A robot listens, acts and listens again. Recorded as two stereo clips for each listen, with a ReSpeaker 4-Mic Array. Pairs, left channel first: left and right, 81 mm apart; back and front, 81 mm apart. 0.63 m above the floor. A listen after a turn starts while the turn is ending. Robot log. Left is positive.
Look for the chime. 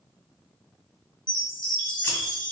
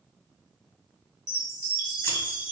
note: The chime: 80° left.
cmd yaw +80
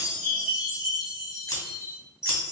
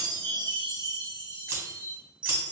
end: Facing the chime, 2 to 4 m away.